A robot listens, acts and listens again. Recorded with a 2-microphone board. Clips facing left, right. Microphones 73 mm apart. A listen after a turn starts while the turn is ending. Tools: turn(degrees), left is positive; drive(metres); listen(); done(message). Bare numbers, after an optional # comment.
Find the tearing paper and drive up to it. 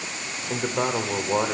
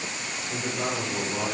listen()
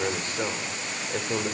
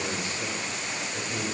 listen()
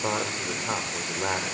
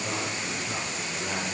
done("I can't make out tearing paper to turn to.")